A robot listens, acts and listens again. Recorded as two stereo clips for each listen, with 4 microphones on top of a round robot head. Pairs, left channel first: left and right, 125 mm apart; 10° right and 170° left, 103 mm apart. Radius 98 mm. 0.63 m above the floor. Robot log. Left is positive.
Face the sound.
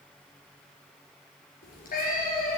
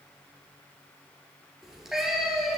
note: The cat meowing: 85° left.
cmd yaw +85
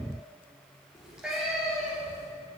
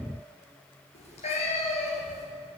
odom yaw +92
end: Facing the cat meowing, 2 to 4 m away.